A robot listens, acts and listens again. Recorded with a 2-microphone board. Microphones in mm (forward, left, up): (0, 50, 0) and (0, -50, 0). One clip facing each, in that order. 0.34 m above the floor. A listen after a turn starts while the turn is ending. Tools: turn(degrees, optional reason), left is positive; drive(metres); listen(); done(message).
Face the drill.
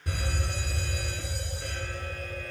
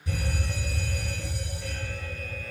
listen()
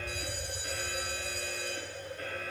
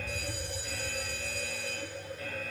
listen()
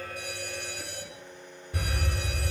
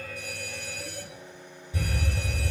turn(degrees=25, reason="The drill: about 25° left or 155° left.")
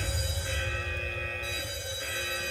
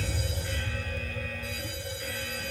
listen()
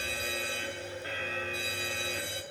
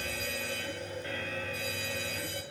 listen()
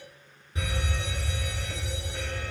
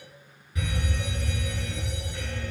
done("I heard a drill, but can't make it out now. It was about straight ahead or 130° left.")